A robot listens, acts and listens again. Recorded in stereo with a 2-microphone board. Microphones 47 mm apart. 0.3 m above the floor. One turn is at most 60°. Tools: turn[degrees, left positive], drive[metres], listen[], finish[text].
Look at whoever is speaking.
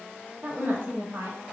Thought: The woman speaking: about 60° right or 120° right.
Action: turn[-60]
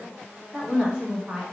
Thought: So it is at 25° right.
Action: turn[-25]
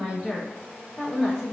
Action: finish[Facing the woman speaking, 2 to 4 m away.]